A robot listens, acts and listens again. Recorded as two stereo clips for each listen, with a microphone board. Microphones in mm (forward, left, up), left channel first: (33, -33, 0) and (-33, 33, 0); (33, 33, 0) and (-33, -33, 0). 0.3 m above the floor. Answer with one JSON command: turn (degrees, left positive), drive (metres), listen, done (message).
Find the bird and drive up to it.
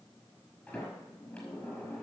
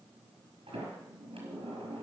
{"listen": true}
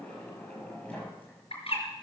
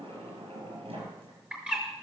{"turn": -55}
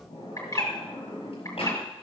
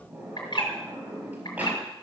{"drive": 1.0}
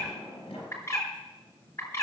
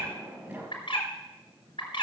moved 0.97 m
{"turn": 15}
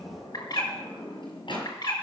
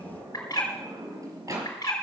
{"drive": 1.0}
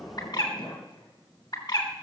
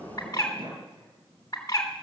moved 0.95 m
{"drive": 1.0}
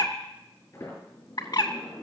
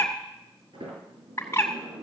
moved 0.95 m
{"turn": -10}
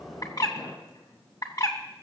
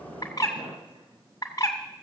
{"drive": 1.0}
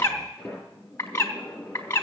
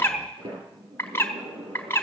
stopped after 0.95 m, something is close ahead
{"done": "I am next to the bird."}